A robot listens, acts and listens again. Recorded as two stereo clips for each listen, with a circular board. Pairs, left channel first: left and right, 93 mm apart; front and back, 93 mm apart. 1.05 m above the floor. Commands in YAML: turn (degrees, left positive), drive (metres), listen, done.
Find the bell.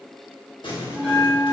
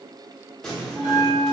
turn: -10
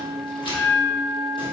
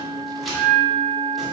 done: "Facing the bell, 1 to 2 m away."